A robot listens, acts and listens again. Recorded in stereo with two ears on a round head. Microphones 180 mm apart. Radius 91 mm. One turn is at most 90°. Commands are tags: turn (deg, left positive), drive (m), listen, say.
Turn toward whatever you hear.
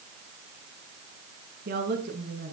<turn deg="-50"/>
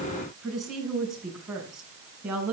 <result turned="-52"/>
<say>Found it: a woman speaking, straight ahead.</say>